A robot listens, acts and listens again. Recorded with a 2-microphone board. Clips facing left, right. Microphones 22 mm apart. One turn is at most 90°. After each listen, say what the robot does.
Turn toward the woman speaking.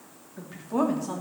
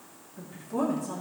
Turn 55° left.
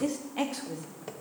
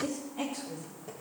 Turn 85° left.
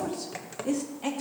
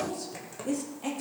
Turn 15° left.
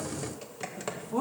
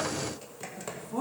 Turn 10° left.
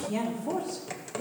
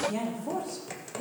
Found it: a woman speaking, straight ahead, 2 to 4 m away.